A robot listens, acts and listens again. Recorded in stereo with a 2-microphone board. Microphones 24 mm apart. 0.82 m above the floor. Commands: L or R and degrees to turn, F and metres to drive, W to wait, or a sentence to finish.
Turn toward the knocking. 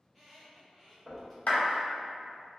R75
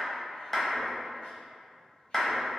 W
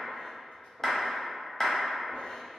W
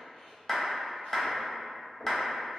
R15
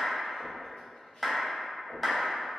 Found it: knocking, straight ahead.